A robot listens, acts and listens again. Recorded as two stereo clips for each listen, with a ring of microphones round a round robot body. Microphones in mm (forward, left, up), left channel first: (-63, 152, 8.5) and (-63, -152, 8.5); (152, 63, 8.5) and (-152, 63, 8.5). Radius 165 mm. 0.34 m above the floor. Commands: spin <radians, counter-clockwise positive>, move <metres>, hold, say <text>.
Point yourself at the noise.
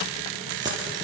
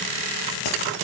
spin -0.17
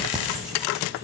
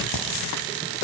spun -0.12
say Facing the keys jangling.